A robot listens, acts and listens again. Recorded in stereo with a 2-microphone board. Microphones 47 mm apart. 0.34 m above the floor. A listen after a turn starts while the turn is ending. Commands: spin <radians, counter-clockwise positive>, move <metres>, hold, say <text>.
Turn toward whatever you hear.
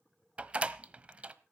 spin -0.52
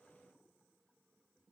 hold
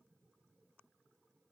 say I heard a door slam, but can't make it out now. It was about straight ahead or 120° right.